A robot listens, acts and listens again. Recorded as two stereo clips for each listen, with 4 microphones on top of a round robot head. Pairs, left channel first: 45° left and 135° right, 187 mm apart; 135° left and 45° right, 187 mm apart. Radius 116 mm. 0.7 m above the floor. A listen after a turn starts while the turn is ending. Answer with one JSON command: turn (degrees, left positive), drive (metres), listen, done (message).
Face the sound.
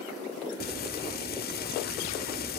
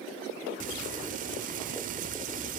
{"done": "Facing the frying."}